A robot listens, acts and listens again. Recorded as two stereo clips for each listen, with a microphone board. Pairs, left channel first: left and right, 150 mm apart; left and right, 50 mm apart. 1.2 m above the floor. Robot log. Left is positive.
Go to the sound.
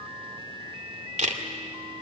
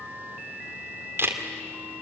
note: The camera shutter: about 55° right or 125° right.
cmd yaw -55
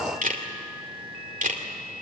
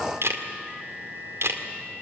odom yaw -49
note: So it is at 75° right.
cmd yaw -75
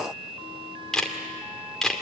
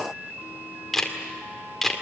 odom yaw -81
cmd fwd 1.0
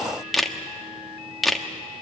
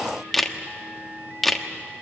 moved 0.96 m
cmd fwd 1.0
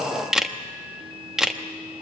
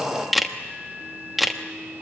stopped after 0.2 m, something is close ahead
end: I am next to the camera shutter.